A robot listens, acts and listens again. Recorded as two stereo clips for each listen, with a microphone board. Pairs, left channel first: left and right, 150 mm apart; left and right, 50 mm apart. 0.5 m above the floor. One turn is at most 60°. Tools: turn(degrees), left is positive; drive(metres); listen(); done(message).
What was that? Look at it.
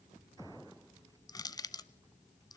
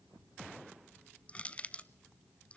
turn(degrees=25)
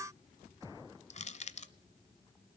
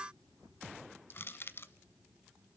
turn(degrees=60)
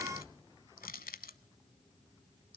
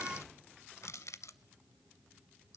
turn(degrees=60)
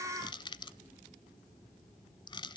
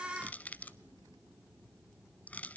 turn(degrees=35)
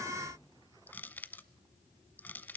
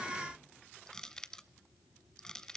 turn(degrees=15)
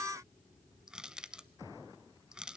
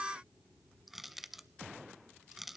done("Found it: crushing, straight ahead.")